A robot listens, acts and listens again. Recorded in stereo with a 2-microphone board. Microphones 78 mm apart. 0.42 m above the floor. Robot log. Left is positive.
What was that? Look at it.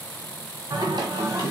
note: The singing: about 70° right or 110° right.
cmd yaw -70
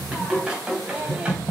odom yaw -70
note: So it is at 15° right.
cmd yaw -15
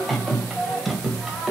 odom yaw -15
end: Found it: singing, straight ahead.